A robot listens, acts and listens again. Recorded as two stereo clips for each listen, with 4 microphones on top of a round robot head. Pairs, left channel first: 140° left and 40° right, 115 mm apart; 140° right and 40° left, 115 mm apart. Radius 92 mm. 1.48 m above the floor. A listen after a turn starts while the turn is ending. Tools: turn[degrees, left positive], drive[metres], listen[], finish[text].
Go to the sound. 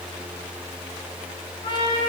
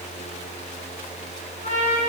Thought: The trumpet: 170° right.
Action: turn[-170]
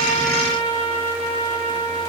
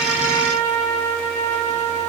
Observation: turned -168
Action: drive[1.0]
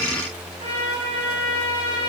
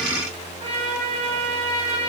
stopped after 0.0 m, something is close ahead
Action: finish[Something is in my way. I am facing the trumpet but have not reached it.]